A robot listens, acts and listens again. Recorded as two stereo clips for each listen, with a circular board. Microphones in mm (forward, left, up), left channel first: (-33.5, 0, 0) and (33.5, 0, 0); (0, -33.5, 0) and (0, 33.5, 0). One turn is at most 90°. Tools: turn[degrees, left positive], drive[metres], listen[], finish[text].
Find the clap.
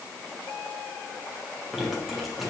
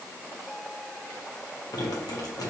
Action: listen[]
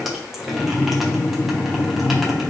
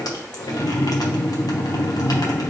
Action: listen[]
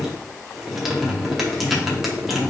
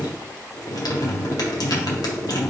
Action: finish[I can't make out a clap to turn to.]